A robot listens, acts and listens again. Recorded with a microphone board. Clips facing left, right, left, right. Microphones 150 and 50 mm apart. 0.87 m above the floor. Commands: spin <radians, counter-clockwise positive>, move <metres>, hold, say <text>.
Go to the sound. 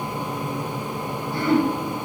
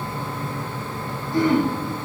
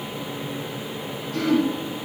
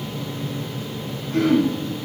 spin -1.57
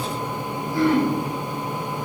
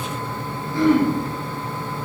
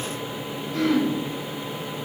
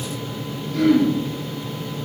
spin 0.17
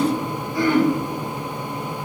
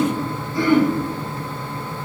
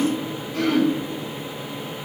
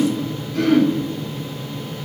move 1.0
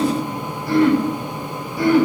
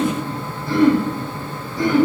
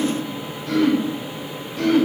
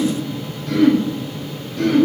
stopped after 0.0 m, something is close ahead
say Something is in my way. I am facing the throat clearing but have not reached it.